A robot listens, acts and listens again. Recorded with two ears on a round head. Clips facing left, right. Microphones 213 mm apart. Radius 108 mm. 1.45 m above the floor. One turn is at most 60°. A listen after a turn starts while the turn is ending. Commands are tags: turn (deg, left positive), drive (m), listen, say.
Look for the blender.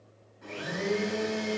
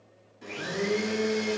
<turn deg="-45"/>
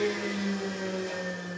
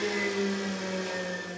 <turn deg="-60"/>
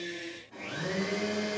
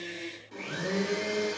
<turn deg="-55"/>
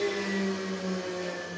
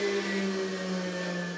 <turn deg="-20"/>
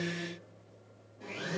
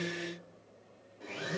<say>Found it: a blender, straight ahead.</say>